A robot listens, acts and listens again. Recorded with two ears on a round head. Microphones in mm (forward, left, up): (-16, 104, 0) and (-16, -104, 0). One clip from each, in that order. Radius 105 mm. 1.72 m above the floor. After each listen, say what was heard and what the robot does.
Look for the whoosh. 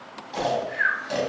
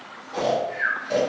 The whoosh: about 25° left or 155° left. Turn 25° left.
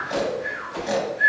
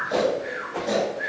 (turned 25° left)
So it is at 125° left. Turn 125° left.
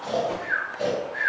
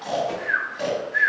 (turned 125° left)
The whoosh is now 25° right. Turn 25° right.
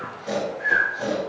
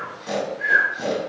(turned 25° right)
Keep listening.
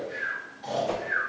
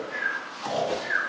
The whoosh is now 20° left. Turn 20° left.
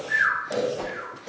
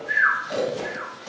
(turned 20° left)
Found it: a whoosh, straight ahead.